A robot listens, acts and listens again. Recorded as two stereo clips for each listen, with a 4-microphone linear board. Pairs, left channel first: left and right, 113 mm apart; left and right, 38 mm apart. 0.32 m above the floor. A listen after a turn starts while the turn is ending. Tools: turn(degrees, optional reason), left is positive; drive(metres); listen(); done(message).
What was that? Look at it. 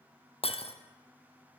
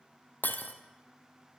turn(degrees=65, reason="The breaking glass: about 65° left or 115° left.")
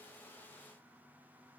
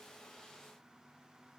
listen()
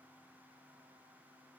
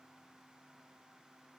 done("I heard breaking glass, but can't make it out now. It was about straight ahead or 50° left.")